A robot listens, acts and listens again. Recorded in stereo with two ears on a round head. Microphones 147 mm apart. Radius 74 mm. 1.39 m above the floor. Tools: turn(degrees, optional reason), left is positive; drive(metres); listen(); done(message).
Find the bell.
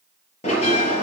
turn(degrees=40, reason="The bell: about 40° left or 140° left.")
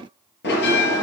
turn(degrees=100, reason="So it is at 100° left.")
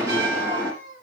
turn(degrees=-15, reason="The bell is now 15° right.")
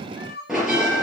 done("Facing the bell.")